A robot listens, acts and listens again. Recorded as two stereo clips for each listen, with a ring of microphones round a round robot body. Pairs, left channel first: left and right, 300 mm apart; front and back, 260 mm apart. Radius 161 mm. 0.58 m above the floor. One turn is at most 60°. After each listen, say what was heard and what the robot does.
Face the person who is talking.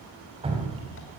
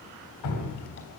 Keep listening.
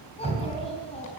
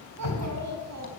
The child speaking: 160° left. Turn 60° left.
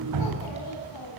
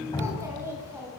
The child speaking is now 100° left. Turn 60° left.
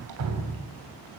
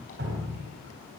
Nothing new. It was at 40° left. Turn 40° left.
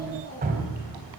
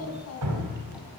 The child speaking is now 25° left. Turn 25° left.
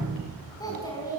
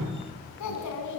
The child speaking is now 10° left. Turn 10° left.
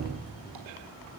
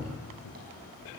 Found it: a child speaking, straight ahead.